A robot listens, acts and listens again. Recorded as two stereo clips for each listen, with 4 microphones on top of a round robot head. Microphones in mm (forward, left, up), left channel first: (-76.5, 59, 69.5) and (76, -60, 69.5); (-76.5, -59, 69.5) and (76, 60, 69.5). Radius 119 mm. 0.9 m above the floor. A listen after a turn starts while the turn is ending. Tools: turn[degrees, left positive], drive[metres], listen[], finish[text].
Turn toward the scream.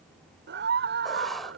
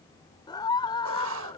Thought: The scream: 70° right.
Action: turn[-70]
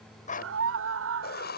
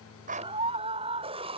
Thought: The scream is now 25° right.
Action: turn[-25]
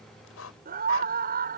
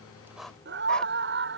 Action: finish[Found it: a scream, straight ahead.]